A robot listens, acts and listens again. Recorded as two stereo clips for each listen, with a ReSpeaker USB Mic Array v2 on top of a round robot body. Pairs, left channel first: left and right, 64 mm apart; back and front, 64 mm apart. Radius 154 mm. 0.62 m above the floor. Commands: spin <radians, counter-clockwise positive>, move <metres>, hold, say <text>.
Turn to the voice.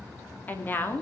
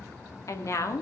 spin 2.53
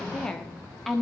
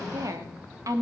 say Facing the woman speaking, 2 to 4 m away.